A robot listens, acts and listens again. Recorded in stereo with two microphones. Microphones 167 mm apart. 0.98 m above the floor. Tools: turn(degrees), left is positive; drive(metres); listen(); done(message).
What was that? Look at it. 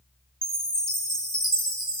turn(degrees=25)
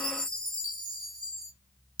done("Found it: a chime, straight ahead, 1 to 2 m away.")